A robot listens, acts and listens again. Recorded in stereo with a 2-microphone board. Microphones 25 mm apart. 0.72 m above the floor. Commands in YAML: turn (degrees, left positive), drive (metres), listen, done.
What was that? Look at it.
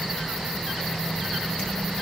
listen: true
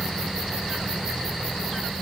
listen: true
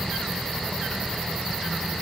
done: "I can't make out anything to turn to."